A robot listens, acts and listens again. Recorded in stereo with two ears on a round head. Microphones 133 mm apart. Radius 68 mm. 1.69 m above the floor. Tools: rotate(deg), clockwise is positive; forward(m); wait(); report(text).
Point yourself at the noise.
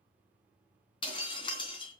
rotate(-35)
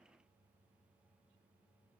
wait()
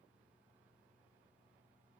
report("I heard breaking glass, but can't make it out now. It was about straight ahead or 110° left.")